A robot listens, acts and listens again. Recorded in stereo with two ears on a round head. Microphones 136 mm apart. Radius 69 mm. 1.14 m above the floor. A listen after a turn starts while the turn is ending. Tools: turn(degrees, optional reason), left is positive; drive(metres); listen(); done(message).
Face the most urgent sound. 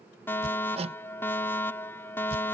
turn(degrees=30)
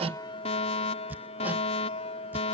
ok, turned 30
turn(degrees=135, reason="So it is at 135° left.")
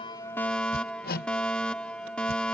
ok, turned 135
done("Facing the fire alarm.")